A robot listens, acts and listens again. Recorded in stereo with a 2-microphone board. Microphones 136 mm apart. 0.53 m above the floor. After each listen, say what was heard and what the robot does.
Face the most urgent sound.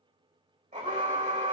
The alarm: about 65° right or 115° right. Turn 65° right.
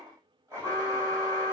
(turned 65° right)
So it is at 25° right. Turn 25° right.
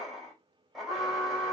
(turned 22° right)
Facing the alarm, 2 to 4 m away.